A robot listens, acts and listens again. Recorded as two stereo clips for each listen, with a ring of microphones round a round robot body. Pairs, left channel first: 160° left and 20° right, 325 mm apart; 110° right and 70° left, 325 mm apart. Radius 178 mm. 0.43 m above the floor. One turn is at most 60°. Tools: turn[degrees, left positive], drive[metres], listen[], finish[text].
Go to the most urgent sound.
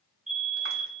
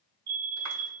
Thought: The fire alarm: 40° left.
Action: turn[40]
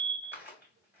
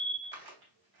Action: drive[1.0]
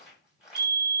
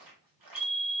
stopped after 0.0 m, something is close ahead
Action: finish[Blocked. The fire alarm is further on, straight ahead.]